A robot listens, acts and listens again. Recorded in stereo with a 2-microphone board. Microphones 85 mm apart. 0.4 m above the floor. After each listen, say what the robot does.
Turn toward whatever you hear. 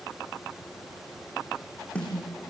Turn 30° left.
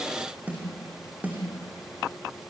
Turn 20° right.
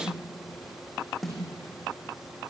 Facing the snare drum, over 4 m away.